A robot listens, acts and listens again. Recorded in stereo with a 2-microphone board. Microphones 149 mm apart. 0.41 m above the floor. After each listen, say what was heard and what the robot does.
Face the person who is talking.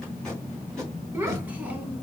Turn 30° right.
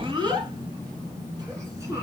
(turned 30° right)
The child speaking: about 20° right or 160° right. Turn 20° right.
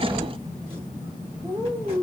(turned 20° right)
The child speaking: about 30° right or 150° right. Turn 30° right.
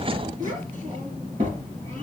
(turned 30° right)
So it is at 125° right. Turn 125° right.
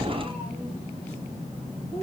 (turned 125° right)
The child speaking is now 35° left. Turn 35° left.
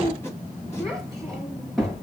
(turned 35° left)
Found it: a child speaking, straight ahead.